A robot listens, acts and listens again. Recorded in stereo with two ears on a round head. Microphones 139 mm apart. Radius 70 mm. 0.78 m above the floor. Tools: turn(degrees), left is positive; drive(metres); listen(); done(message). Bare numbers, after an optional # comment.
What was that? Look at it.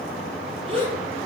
# The gasp: about 35° right or 145° right.
turn(-35)
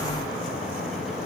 listen()
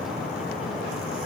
done("I heard a gasp, but can't make it out now. It was about straight ahead or 110° right.")